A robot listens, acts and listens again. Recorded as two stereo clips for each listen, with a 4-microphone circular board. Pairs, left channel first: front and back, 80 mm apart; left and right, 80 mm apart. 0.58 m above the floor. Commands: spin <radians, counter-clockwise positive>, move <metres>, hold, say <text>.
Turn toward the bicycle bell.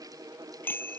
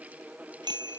spin -1.13
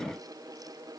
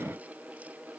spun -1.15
hold
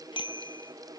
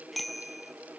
say Found it: a bicycle bell, straight ahead.